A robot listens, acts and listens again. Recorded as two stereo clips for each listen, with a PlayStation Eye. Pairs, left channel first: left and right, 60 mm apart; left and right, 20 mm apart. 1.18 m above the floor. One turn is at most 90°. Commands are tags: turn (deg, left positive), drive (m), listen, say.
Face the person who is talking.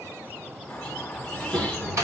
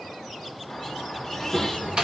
<turn deg="-20"/>
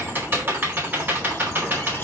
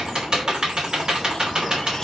<listen/>
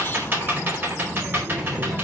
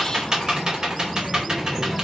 <say>Facing the child speaking.</say>